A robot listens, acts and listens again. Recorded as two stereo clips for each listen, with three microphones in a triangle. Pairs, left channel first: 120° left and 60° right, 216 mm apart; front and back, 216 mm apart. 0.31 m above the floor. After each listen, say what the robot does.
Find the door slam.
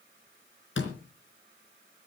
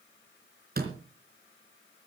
Turn 140° left.
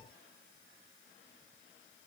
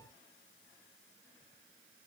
I heard a door slam from this way, but can't make it out now.